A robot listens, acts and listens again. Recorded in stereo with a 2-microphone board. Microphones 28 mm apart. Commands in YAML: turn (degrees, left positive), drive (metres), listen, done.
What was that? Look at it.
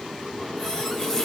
turn: 30
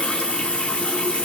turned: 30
turn: 140
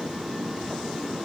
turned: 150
turn: -10
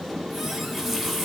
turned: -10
done: "Found it: a running tap, straight ahead."